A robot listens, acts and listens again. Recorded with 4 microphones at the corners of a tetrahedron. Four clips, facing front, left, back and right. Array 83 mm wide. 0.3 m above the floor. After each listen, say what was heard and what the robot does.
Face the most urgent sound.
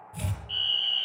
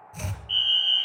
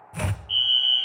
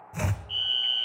The fire alarm: 70° left. Turn 70° left.
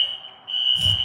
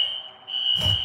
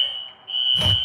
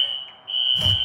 The fire alarm is now 35° left. Turn 35° left.
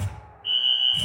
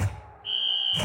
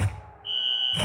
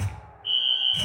Found it: a fire alarm, straight ahead.